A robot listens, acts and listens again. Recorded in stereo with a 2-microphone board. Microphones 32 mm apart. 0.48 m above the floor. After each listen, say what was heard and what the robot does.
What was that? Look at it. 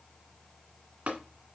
The tapping: about 60° right or 120° right. Turn 60° right.
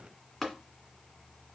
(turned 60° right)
Found it: tapping, straight ahead.